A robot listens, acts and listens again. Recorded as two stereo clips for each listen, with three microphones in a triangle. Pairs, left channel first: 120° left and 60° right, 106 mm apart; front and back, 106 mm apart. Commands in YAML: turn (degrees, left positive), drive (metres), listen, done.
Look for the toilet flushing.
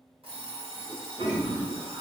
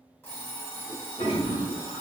turn: -20
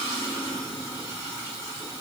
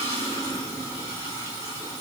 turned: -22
done: "Found it: a toilet flushing, straight ahead."